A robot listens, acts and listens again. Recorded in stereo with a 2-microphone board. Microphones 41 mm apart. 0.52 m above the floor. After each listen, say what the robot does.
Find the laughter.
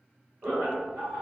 Turn 60° right.
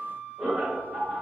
Turn 30° right.
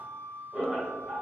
Turn 10° right.
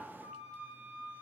Keep listening.
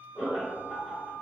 Facing the laughter, 1 to 2 m away.